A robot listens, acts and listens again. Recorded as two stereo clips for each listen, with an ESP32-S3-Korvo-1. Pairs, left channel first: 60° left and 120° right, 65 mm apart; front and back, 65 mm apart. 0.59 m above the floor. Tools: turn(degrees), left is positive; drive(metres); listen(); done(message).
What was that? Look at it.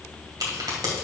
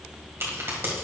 turn(degrees=-130)
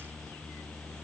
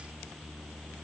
done("Facing where the crack came from. I can't hear it now.")